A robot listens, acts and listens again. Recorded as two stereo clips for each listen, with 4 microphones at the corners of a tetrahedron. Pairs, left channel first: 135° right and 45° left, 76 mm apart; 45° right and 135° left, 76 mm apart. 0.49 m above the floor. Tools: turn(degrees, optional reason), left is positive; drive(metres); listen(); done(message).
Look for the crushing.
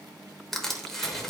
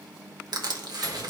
turn(degrees=140, reason="The crushing: 140° left.")
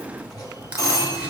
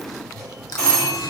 listen()
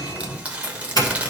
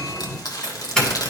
turn(degrees=-25, reason="The crushing is now 25° right.")
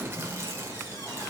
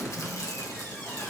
listen()
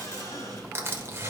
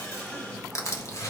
turn(degrees=-10, reason="The crushing is now 10° right.")
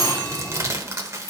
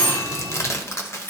done("Facing the crushing.")